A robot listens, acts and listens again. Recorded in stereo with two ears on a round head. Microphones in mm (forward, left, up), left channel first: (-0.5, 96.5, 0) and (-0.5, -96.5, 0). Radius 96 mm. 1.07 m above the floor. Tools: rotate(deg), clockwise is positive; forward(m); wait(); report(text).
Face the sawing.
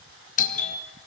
wait()
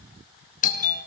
wait()
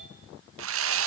rotate(70)
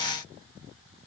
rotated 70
wait()
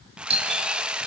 report("Found it: sawing, straight ahead, 1 to 2 m away.")